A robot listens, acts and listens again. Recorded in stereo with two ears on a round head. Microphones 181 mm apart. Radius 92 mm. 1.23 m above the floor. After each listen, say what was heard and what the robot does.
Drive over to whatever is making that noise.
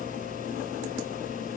Keep listening.
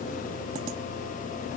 Keep listening.
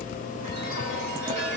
The chime: about 40° right or 140° right. Turn 40° right.
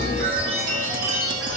So it is at 100° right. Turn 100° right.
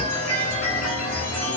The chime is now 10° left. Turn 10° left.
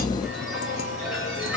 Drive 1.0 m forward.
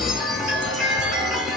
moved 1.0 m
Drive 1.0 m forward.
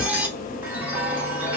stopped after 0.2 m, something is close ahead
The chime is now 10° right. Turn 10° right.
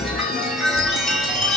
I am next to the chime.